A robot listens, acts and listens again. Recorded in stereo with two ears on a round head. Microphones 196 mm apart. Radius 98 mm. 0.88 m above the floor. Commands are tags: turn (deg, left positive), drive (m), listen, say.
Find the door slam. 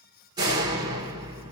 <turn deg="-20"/>
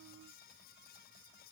<listen/>
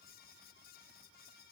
<say>I heard a door slam, but can't make it out now. It was about straight ahead or 140° right.</say>